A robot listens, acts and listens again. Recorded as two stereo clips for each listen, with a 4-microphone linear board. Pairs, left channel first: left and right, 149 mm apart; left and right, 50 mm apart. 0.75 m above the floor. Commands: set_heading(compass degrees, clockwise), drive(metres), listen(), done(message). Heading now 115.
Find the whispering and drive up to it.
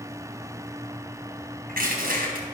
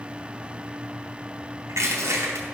listen()
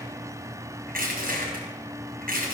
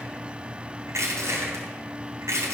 listen()
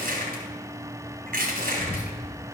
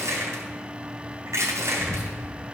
set_heading(60)
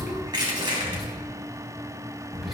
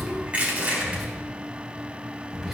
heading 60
drive(1.0)
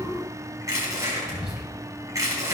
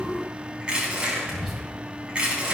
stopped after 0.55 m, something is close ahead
done("Something is in my way. I am facing the whispering but have not reached it.")